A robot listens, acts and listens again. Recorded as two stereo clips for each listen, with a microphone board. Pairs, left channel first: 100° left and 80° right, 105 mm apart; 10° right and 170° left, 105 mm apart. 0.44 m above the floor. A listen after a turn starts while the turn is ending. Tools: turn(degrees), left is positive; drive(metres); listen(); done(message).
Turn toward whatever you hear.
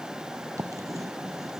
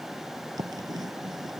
turn(degrees=-140)
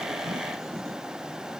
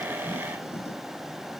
listen()
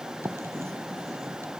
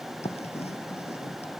turn(degrees=-15)
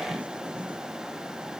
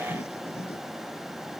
listen()
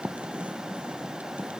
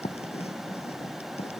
done("Found it: writing, straight ahead.")